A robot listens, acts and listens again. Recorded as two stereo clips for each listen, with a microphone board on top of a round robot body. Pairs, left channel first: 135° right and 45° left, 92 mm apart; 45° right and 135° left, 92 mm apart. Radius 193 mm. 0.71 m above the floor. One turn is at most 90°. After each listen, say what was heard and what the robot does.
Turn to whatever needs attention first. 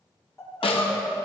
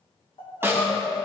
The crying: 75° right. Turn 75° right.
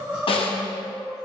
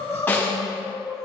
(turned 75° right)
The crying is now 30° right. Turn 30° right.
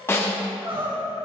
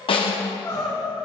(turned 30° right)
The crying is now 15° left. Turn 15° left.
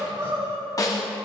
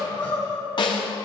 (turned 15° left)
Found it: crying, straight ahead, 2 to 4 m away.